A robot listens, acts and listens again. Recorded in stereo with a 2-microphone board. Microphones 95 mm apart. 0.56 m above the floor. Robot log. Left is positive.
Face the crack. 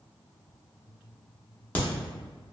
note: The crack: about 20° left or 160° left.
cmd yaw +20
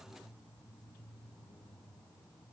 cmd idle
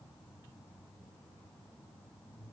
end: I heard a crack, but can't make it out now. It was about straight ahead or 140° left.